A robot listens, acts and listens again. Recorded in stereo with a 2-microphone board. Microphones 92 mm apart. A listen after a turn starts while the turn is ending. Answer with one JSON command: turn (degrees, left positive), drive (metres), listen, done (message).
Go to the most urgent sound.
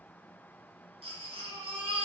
{"turn": -90}
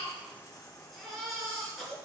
{"drive": 1.0}
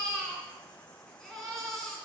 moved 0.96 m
{"drive": 1.0}
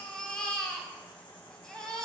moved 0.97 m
{"turn": 10}
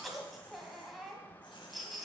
{"drive": 1.0}
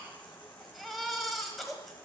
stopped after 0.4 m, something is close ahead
{"done": "Arrived at the baby crying, straight ahead."}